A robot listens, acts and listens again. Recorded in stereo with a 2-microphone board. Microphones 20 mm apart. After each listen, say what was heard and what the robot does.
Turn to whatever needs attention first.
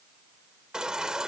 The baby crying: about 40° right or 140° right. Turn 40° right.
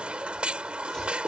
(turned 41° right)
So it is at 100° right. Turn 100° right.
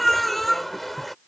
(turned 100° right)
Facing the baby crying.